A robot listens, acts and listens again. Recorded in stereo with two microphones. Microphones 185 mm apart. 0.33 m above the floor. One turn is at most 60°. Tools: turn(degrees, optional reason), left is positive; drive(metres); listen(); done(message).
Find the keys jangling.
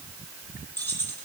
turn(degrees=30)
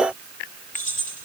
turn(degrees=60, reason="So it is at 140° left.")
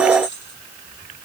turn(degrees=60, reason="The keys jangling is now 70° left.")
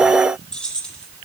done("Facing the keys jangling, over 4 m away.")